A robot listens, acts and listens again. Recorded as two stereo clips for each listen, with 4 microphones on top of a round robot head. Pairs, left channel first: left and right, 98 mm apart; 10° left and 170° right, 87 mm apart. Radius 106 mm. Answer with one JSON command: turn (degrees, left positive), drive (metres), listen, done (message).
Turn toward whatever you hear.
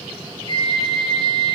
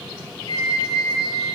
{"turn": 55}
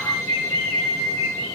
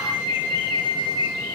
{"done": "Found it: a flute, straight ahead."}